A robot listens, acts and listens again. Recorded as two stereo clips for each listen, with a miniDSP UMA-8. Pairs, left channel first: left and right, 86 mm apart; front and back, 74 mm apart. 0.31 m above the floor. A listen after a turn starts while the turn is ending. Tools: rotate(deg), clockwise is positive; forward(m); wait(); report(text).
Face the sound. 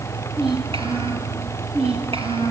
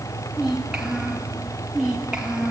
rotate(100)
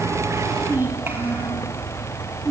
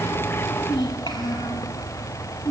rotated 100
rotate(25)
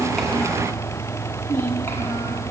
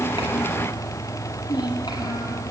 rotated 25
rotate(-25)
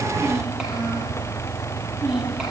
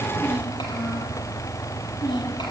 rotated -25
rotate(10)
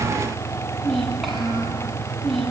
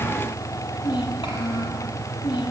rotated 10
report("Facing the child speaking.")